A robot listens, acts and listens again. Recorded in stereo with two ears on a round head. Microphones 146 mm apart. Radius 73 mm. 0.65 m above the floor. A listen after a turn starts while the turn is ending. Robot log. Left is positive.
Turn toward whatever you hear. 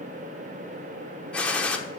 cmd yaw +30
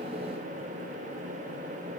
cmd idle
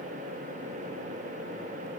end: I heard a gunshot, but can't make it out now. It was about 20° right or 140° left.